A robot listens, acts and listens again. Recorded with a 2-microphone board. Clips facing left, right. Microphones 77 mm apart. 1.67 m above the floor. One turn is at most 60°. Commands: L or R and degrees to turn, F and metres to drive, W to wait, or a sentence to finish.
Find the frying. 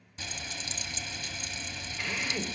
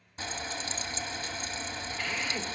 R35
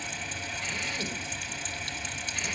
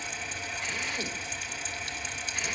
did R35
Found it: frying, straight ahead.